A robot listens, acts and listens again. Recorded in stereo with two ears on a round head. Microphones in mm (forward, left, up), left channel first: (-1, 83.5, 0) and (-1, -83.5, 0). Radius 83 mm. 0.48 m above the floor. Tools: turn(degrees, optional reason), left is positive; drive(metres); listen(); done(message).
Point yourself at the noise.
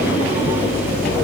listen()
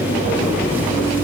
listen()
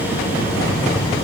done("I can't make out anything to turn to.")